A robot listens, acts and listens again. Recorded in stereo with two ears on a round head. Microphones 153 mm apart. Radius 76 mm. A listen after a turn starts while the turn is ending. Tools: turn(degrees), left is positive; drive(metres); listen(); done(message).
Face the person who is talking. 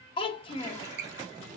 turn(degrees=30)
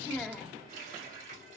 done("Found it: a child speaking, straight ahead.")